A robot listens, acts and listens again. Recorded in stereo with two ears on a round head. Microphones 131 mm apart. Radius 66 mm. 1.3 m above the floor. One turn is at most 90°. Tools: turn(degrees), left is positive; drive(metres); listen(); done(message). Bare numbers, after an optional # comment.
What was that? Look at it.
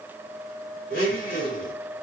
# The blender: about 70° left or 110° left.
turn(70)
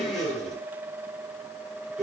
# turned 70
done("Facing the blender, 2 to 4 m away.")